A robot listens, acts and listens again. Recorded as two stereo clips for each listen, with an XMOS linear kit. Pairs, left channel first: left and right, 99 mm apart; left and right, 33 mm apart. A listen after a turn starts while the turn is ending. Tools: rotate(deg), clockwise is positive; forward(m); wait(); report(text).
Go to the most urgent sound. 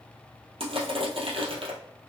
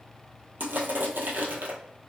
wait()
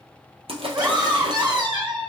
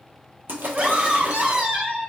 rotate(45)
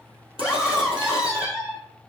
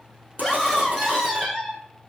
rotate(10)
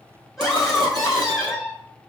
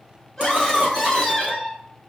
forward(1.0)
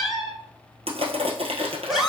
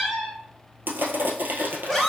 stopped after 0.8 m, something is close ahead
report("Arrived at the scream, straight ahead.")